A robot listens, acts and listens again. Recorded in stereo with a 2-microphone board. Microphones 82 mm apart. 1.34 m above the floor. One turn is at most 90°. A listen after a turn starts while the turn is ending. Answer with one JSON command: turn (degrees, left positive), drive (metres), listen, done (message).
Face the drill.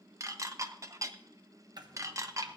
{"listen": true}
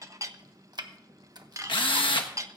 {"turn": 90}
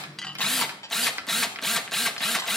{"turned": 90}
{"done": "Facing the drill."}